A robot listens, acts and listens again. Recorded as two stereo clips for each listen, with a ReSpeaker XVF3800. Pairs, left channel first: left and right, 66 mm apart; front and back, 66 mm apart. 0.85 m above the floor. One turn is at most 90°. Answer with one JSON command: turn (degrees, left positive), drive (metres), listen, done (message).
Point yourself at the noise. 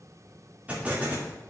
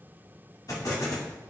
{"turn": -25}
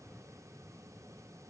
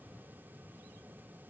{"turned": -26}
{"done": "I heard an explosion from this way, but can't make it out now."}